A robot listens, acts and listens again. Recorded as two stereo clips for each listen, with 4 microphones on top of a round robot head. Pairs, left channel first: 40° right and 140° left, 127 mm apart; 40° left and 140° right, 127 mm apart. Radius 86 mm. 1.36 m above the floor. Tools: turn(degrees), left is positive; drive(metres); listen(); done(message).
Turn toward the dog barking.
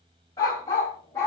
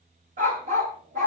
turn(degrees=-115)
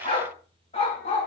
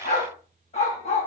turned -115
done("Found it: a dog barking, straight ahead, 2 to 4 m away.")